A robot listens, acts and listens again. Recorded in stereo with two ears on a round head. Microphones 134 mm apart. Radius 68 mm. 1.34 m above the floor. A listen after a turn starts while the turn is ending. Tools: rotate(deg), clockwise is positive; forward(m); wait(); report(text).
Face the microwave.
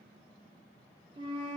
wait()
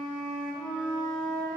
wait()
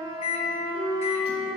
rotate(-40)
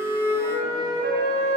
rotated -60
wait()
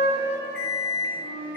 rotate(-80)
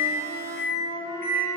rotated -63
rotate(-15)
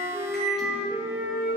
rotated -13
report("Found it: a microwave, straight ahead, 1 to 2 m away.")